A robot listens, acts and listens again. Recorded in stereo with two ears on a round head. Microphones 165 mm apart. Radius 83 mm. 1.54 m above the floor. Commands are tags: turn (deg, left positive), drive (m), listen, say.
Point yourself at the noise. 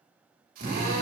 <turn deg="-50"/>
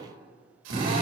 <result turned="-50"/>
<turn deg="-75"/>
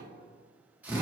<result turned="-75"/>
<turn deg="-10"/>
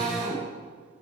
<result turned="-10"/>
<say>Found it: a drill, straight ahead, over 4 m away.</say>